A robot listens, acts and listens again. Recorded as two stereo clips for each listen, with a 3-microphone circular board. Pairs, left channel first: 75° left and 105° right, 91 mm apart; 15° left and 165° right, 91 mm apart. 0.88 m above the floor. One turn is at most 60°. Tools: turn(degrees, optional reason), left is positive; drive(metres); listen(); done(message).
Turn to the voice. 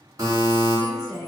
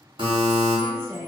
turn(degrees=60, reason="The woman speaking: 140° left.")
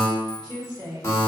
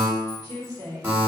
turn(degrees=60, reason="The woman speaking is now 60° left.")
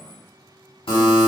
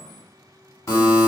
listen()
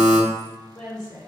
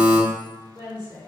done("Found it: a woman speaking, straight ahead, 1 to 2 m away.")